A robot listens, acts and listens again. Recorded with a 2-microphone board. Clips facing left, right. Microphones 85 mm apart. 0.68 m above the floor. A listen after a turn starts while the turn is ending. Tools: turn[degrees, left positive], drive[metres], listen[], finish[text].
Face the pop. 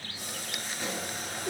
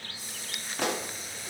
Thought: The pop: about 70° right or 110° right.
Action: turn[-70]
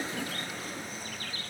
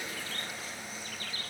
Action: listen[]
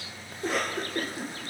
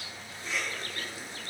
Action: finish[I heard a pop, but can't make it out now. It was about straight ahead or 40° right.]